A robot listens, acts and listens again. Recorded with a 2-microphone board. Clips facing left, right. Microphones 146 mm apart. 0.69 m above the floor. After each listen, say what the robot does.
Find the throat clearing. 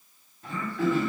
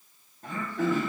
Turn 45° right.
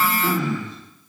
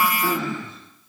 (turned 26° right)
Turn 30° right.
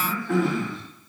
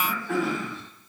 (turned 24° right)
Found it: throat clearing, straight ahead, 1 to 2 m away.